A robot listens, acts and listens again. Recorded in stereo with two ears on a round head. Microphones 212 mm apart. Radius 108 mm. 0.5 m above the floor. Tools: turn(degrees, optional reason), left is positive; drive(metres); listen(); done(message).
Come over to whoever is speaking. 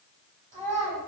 turn(degrees=-35, reason="The child speaking: about 35° right or 145° right.")
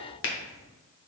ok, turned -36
listen()
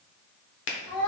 drive(metres=1.0)
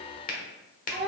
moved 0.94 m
drive(metres=1.0)
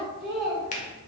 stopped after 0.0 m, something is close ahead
done("Arrived at the child speaking, straight ahead.")